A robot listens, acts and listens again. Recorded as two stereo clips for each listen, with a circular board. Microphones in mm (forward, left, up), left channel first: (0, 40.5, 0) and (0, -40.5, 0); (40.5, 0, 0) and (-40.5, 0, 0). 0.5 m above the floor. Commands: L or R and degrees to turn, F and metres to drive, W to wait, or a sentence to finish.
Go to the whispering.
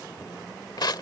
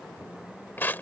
W
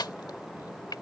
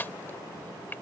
W
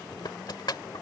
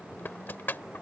I can't make out whispering, only crushing.